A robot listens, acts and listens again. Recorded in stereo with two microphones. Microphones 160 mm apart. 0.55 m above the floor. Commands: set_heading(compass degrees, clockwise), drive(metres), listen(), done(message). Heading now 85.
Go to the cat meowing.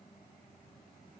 listen()
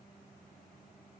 listen()
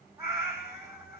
set_heading(100)
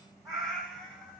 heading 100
drive(1.0)
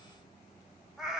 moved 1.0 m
drive(1.0)
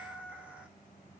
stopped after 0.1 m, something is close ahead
done("I am next to the cat meowing.")